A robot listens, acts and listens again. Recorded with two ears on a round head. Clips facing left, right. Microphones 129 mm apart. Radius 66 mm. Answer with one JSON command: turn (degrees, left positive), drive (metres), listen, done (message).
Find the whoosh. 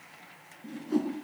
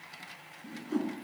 {"turn": 30}
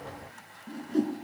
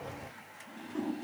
{"turn": 135}
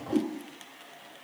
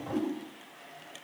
{"turn": 35}
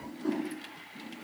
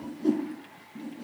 {"turn": -20}
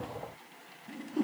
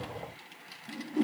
{"done": "Found it: a whoosh, straight ahead, over 4 m away."}